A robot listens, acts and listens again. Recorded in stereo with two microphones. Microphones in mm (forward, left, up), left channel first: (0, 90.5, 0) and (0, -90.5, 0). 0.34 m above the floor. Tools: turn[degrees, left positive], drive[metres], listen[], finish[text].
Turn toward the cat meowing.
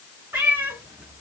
Action: turn[-30]
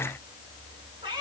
Thought: So it is at 155° right.
Action: turn[-155]
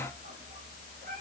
Thought: The cat meowing is now 50° right.
Action: turn[-50]
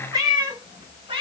Thought: The cat meowing is now 30° right.
Action: turn[-30]
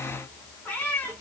Thought: The cat meowing is now 10° left.
Action: turn[10]
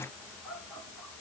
Action: listen[]
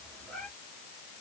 Action: finish[Found it: a cat meowing, straight ahead.]